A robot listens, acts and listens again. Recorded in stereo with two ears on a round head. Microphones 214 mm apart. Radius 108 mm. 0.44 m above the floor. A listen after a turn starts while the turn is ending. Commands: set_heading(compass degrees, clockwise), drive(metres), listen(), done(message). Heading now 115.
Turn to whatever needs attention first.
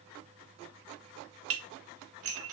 listen()
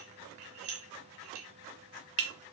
listen()
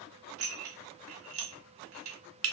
done("I can't make out anything urgent to turn to.")